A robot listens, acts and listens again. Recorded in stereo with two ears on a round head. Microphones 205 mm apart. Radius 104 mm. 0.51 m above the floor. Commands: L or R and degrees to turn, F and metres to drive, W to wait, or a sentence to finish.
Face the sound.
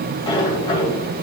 L20
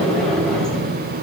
Found it: a sliding door, straight ahead, 2 to 4 m away.